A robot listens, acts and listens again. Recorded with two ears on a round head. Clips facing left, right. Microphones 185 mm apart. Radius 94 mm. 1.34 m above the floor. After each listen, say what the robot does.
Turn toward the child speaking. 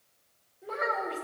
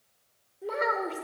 Turn 50° right.
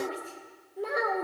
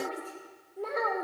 Turn 15° left.
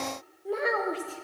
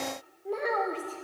Turn 10° left.
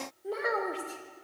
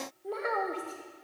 Turn 10° left.
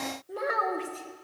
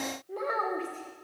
Turn 15° left.
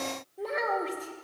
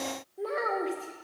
Found it: a child speaking, straight ahead.